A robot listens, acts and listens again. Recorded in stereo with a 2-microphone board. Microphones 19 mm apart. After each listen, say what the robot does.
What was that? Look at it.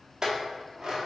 Turn 30° right.
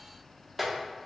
Facing the clink, under 1 m away.